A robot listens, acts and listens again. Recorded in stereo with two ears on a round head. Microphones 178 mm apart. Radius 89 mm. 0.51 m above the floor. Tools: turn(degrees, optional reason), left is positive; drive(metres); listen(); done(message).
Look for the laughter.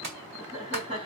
turn(degrees=-25, reason="The laughter: about 25° right or 155° right.")
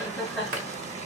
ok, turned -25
done("Facing the laughter, 1 to 2 m away.")